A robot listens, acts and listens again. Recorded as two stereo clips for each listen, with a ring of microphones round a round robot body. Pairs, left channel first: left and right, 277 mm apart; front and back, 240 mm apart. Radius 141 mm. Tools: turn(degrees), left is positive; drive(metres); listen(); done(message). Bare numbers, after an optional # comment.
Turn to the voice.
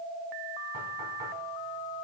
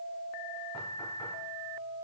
listen()
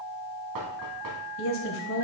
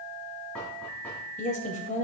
# The woman speaking: 55° left.
turn(55)
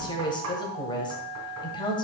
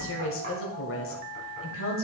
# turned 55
# The woman speaking is now 20° left.
turn(20)
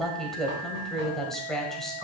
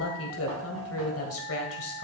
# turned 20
done("Found it: a woman speaking, straight ahead.")